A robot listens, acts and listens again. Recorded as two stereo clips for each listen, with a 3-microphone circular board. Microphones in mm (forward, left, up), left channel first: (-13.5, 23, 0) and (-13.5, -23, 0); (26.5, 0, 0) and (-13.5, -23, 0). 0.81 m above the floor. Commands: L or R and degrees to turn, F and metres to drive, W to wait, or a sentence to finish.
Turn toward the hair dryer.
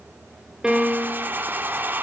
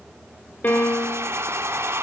R135
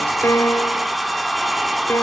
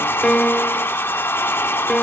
Found it: a hair dryer, straight ahead, 1 to 2 m away.